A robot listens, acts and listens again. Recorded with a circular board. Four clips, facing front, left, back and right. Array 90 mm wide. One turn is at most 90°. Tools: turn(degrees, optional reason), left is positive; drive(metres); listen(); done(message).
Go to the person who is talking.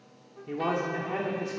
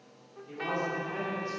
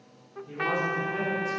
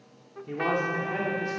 turn(degrees=-40, reason="The man speaking: 40° right.")
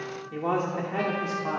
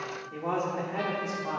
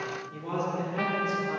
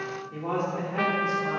drive(metres=1.0)
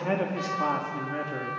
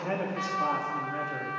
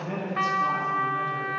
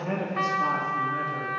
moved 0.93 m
turn(degrees=10, reason="The man speaking is now 10° left.")
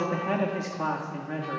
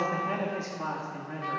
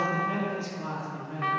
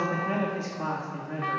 drive(metres=1.0)
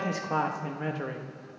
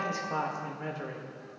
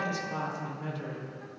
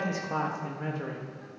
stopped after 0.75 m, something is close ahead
done("I am next to the man speaking.")